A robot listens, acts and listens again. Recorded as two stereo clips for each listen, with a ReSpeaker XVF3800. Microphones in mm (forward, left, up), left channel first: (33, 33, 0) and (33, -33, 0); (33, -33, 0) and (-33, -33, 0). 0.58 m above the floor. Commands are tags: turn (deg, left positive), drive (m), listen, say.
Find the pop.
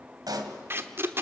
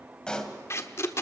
<turn deg="-80"/>
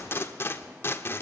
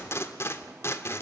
<say>Facing where the pop came from. I can't hear it now.</say>